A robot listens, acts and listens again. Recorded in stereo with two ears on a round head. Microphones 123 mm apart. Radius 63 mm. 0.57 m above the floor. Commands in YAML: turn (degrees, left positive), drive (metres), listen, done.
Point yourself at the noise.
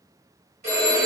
turn: -55
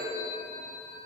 turn: -65
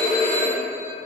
turn: 25
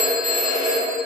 done: "Facing the phone ringing."